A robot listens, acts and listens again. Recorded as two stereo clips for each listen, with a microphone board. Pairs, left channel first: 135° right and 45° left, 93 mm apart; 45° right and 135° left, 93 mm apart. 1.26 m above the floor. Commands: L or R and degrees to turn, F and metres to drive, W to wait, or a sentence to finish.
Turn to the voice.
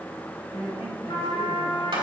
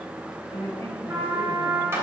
R20
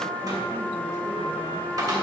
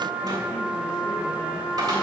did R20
W
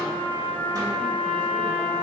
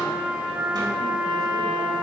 W
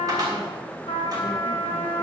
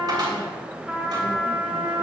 I heard a woman speaking from this way, but can't make it out now.